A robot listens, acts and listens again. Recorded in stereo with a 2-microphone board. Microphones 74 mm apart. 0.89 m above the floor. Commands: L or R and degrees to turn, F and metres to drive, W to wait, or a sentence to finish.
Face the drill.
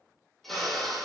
L30
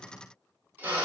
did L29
R25
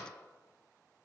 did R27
W
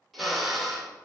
Facing the drill, 1 to 2 m away.